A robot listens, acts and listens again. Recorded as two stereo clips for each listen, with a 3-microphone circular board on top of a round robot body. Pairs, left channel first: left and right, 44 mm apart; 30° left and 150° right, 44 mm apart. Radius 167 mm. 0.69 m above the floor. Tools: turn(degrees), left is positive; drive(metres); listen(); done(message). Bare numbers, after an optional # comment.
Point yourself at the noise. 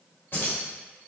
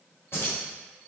# The keys jangling: 55° left.
turn(55)
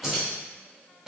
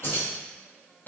# The keys jangling is now 15° right.
turn(-15)
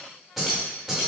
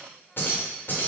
# The keys jangling is now 15° right.
turn(-15)
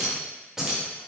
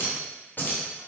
# The keys jangling is now 15° right.
turn(-15)
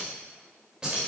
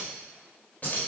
# The keys jangling is now 20° right.
turn(-20)
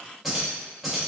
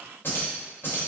done("Found it: keys jangling, straight ahead, 1 to 2 m away.")